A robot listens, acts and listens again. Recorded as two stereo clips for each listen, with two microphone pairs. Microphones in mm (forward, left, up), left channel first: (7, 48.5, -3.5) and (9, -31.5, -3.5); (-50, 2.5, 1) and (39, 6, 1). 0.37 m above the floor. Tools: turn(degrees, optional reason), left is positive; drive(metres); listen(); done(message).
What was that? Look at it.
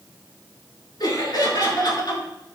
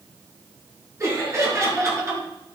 turn(degrees=60, reason="The laughter: 60° left.")
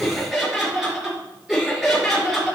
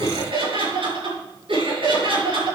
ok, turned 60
done("Found it: laughter, straight ahead, over 4 m away.")